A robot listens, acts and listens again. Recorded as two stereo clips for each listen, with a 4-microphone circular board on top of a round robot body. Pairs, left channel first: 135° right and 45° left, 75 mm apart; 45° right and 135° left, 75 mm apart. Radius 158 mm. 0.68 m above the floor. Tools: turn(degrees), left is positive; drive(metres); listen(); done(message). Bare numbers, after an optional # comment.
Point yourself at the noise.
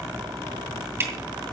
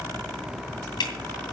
# The dripping: 15° right.
turn(-15)
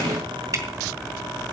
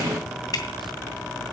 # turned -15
done("Facing the dripping, 2 to 4 m away.")